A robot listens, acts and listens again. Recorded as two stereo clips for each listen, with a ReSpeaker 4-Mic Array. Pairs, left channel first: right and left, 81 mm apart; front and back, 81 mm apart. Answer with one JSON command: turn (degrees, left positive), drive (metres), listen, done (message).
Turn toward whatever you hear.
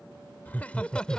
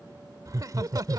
{"turn": -165}
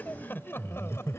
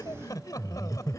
{"turn": -40}
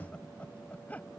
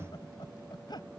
{"turn": -20}
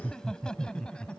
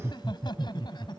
{"turn": -10}
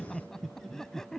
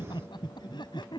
{"done": "Found it: laughter, straight ahead."}